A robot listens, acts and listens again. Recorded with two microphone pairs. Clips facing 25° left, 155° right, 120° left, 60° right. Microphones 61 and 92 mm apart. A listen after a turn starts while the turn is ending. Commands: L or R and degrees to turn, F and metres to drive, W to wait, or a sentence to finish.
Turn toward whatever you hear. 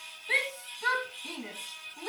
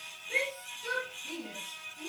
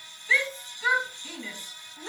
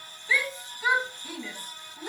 L20
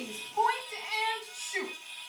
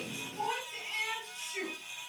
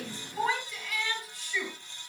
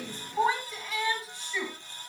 Facing the shout.